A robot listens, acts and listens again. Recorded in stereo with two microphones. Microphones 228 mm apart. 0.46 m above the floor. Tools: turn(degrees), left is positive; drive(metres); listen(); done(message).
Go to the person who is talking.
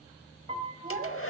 turn(degrees=-40)
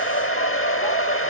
listen()
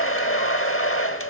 listen()
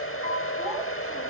done("I heard a child speaking, but can't make it out now. It was about straight ahead or 100° right. I did not reach it.")